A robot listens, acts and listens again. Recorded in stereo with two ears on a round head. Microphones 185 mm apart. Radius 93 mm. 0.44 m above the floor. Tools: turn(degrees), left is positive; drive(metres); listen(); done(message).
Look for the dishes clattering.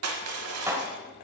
turn(degrees=-30)
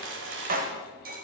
turn(degrees=-135)
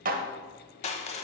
turn(degrees=-45)
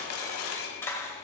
turn(degrees=15)
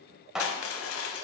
done("Found it: dishes clattering, straight ahead, 1 to 2 m away.")